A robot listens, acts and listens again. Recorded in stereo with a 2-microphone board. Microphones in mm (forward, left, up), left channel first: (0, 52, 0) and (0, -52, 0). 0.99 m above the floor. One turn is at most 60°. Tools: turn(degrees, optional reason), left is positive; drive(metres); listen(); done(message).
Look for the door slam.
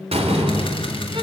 turn(degrees=-60, reason="The door slam: about 75° right or 105° right.")
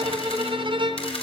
listen()
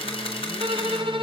done("I heard a door slam, but can't make it out now. It was about 15° right or 45° right.")